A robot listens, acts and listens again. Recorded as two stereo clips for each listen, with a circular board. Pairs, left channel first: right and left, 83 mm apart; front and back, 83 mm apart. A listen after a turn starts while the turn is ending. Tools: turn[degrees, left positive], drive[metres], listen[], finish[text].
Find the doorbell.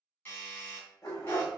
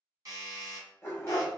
Thought: The doorbell: 145° right.
Action: turn[-145]
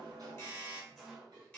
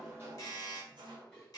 Thought: The doorbell is now 20° right.
Action: turn[-20]
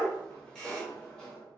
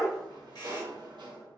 Action: listen[]
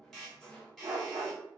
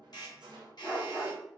Action: finish[Facing the doorbell, 1 to 2 m away.]